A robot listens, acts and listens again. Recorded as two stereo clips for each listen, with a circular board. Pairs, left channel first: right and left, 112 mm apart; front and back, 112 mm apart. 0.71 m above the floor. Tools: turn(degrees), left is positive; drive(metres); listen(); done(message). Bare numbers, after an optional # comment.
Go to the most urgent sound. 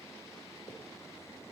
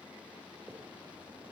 listen()
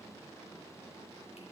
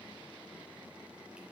listen()
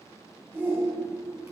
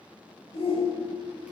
# The shout: 15° left.
turn(15)
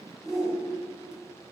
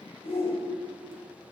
drive(1.0)
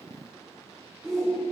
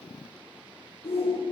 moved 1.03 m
drive(1.0)
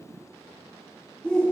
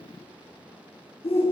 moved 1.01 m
# The shout is now 10° right.
turn(-10)
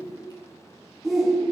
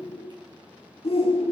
drive(1.0)
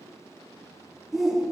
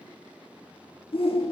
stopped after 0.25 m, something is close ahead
done("Arrived at the shout, straight ahead.")